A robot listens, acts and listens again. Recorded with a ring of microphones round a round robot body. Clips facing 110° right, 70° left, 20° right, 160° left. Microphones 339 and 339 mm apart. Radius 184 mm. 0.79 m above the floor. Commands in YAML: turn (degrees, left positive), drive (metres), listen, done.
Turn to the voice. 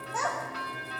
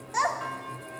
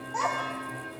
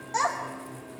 turn: 105
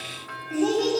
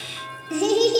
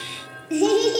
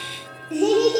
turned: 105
turn: 30
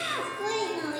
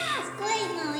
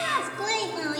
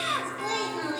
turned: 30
done: "Facing the child speaking, 1 to 2 m away."